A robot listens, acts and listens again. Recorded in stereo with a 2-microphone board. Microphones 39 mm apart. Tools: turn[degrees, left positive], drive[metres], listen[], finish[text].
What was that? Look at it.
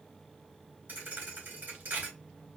Thought: The thud: about 50° right or 130° right.
Action: turn[-50]
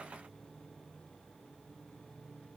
Action: listen[]
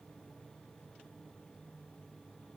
Action: finish[I heard a thud, but can't make it out now. It was about straight ahead or 80° right.]